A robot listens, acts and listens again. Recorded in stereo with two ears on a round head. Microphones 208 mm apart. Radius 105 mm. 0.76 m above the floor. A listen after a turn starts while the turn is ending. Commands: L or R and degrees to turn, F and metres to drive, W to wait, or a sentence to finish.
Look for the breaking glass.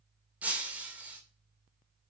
R30
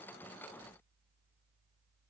W
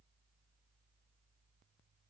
I heard breaking glass, but can't make it out now. It was about 25° left or 145° right.